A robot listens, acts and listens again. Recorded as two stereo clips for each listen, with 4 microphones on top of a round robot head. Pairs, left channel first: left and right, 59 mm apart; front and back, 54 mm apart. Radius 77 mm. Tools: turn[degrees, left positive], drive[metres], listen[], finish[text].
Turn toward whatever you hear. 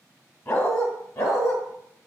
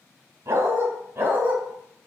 Thought: The dog barking: 120° left.
Action: turn[120]
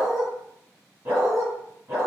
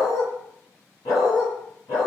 Thought: The dog barking is now 30° right.
Action: turn[-30]
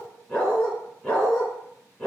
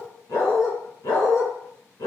Action: finish[Facing the dog barking.]